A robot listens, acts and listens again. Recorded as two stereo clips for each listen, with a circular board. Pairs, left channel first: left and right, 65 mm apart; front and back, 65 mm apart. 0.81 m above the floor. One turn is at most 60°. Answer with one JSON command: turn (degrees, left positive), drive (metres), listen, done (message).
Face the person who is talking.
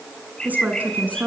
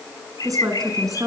{"turn": -60}
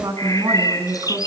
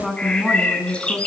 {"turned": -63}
{"turn": -60}
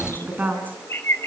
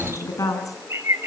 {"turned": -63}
{"turn": -25}
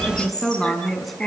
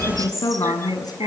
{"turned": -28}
{"done": "Found it: a woman speaking, straight ahead, over 4 m away."}